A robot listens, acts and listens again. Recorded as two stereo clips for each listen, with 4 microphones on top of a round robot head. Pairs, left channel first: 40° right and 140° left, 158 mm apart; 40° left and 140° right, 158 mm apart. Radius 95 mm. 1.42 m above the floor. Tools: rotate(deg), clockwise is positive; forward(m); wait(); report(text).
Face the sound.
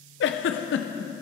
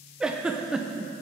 rotate(55)
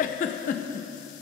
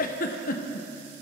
report("Facing the giggle, under 1 m away.")